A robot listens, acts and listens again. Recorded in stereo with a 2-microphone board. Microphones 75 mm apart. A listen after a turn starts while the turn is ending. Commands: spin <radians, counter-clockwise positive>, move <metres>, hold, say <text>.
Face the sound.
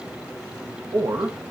spin -1.05
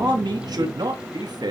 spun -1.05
spin -1.22
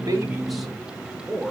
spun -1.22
say Facing the man speaking.